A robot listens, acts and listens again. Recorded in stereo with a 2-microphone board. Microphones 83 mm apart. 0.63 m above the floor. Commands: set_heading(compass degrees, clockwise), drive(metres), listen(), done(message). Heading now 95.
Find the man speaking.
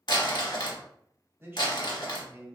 set_heading(125)
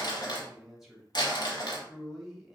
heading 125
done("Found it: a man speaking, straight ahead.")